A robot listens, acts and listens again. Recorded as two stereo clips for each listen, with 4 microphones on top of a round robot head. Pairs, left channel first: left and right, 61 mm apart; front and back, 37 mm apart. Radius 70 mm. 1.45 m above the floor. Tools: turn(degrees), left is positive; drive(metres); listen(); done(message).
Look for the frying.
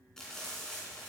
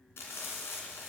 turn(degrees=10)
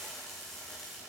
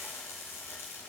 done("Facing the frying.")